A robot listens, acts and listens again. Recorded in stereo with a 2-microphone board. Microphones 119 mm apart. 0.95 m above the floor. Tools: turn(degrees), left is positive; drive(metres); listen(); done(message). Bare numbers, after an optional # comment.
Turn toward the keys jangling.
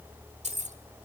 turn(-90)
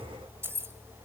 # So it is at 20° right.
turn(-20)
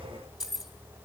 done("Facing the keys jangling.")